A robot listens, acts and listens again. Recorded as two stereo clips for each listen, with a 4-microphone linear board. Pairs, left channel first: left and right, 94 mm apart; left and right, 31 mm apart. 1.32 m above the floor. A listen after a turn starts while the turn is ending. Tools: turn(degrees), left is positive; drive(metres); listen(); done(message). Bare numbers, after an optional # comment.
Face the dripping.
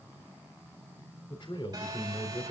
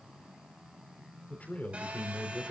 listen()
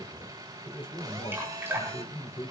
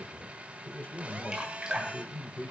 # The dripping: about 25° right or 155° right.
turn(-25)
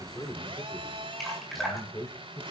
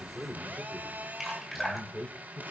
done("Facing the dripping.")